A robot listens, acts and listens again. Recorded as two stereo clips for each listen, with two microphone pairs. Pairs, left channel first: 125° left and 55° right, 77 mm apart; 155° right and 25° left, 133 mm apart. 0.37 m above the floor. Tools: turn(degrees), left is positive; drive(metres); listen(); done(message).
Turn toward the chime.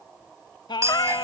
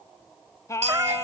done("Facing the chime.")